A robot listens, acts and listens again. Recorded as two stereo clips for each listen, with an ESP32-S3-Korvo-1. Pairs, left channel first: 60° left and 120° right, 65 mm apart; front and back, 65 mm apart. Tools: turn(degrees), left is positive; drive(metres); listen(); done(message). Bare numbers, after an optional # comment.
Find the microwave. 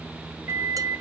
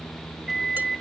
# The microwave: 90° right.
turn(-90)
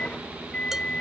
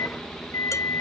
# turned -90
done("Found it: a microwave, straight ahead, under 1 m away.")